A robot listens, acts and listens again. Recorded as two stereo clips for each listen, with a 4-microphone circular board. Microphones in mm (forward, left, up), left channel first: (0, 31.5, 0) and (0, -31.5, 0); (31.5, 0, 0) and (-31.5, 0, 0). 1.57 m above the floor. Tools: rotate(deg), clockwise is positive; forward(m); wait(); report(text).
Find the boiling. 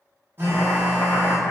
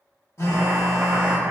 rotate(-130)
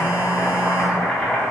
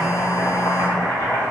rotate(-10)
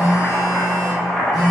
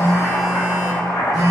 report("Facing the boiling.")